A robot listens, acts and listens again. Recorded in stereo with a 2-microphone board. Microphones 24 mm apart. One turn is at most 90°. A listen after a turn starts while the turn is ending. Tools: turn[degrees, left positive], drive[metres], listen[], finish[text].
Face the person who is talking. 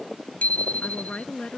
Thought: The woman speaking: about 45° left or 135° left.
Action: turn[45]
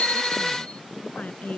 Thought: So it is at 95° left.
Action: turn[90]
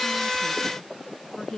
Thought: The woman speaking is now 20° left.
Action: turn[20]
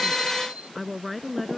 Action: finish[Found it: a woman speaking, straight ahead.]